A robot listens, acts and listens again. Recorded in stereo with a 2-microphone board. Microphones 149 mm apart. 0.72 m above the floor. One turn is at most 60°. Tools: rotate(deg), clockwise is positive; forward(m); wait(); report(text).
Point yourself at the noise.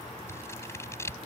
rotate(-20)
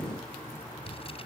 wait()
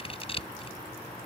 rotate(-60)
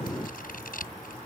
rotate(-60)
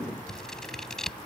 report("Found it: scissors, straight ahead.")